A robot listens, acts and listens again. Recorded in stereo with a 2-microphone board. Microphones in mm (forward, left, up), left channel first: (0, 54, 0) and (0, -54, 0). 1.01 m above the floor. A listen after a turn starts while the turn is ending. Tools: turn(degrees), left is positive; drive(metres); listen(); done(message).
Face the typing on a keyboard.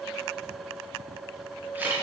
listen()
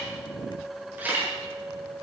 listen()
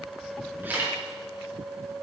done("I can't make out typing on a keyboard to turn to.")